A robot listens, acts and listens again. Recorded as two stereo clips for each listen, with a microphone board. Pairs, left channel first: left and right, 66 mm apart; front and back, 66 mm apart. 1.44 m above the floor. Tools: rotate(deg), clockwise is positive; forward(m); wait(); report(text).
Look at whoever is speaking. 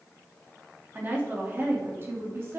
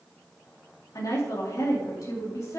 rotate(40)
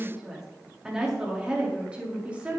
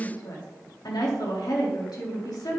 rotate(20)
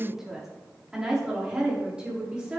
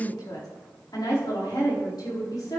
rotate(15)
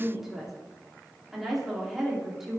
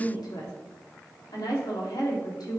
report("Facing the woman speaking, over 4 m away.")